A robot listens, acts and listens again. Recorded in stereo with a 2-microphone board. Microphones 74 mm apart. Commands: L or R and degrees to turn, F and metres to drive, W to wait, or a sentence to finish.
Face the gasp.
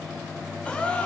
L15
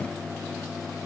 W
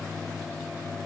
I heard a gasp, but can't make it out now. It was about straight ahead or 150° left.